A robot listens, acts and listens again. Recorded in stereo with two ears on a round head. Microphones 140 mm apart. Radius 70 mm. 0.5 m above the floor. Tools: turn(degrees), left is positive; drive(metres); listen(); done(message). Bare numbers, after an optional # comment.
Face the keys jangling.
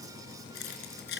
turn(90)
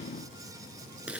# So it is at 10° right.
turn(-10)
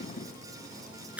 # The keys jangling is now 10° right.
turn(-10)
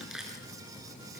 done("Facing the keys jangling.")